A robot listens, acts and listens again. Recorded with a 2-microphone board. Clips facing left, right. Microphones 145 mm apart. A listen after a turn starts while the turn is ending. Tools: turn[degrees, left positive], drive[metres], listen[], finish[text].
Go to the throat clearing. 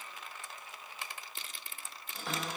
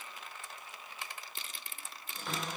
Action: listen[]
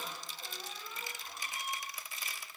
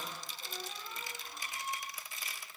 Action: listen[]
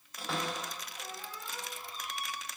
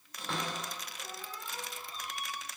Action: finish[I can't make out throat clearing, only a cupboard door.]